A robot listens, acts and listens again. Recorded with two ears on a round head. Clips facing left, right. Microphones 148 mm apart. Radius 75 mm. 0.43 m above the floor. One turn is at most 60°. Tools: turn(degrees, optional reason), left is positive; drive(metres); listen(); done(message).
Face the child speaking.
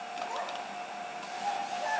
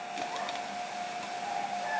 turn(degrees=60, reason="The child speaking: about 60° left or 120° left.")
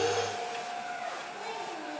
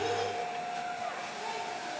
turn(degrees=60, reason="So it is at 70° left.")
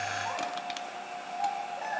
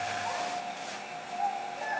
turn(degrees=30, reason="The child speaking is now 30° left.")
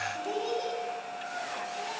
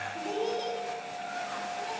done("Facing the child speaking, over 4 m away.")